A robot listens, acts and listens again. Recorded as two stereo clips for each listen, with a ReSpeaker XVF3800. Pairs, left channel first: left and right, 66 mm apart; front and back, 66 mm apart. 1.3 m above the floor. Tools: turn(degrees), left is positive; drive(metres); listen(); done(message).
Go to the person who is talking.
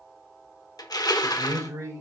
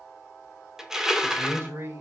turn(degrees=-130)
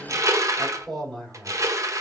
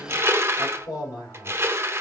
drive(metres=1.0)
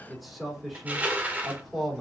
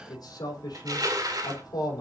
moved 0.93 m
drive(metres=1.0)
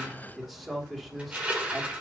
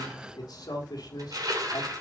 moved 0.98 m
drive(metres=1.0)
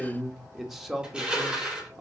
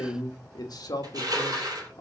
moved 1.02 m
drive(metres=1.0)
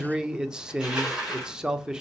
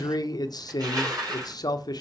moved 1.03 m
turn(degrees=-10)
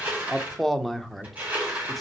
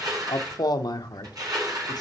drive(metres=1.0)
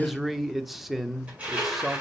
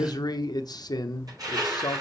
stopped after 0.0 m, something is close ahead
done("I am next to the man speaking.")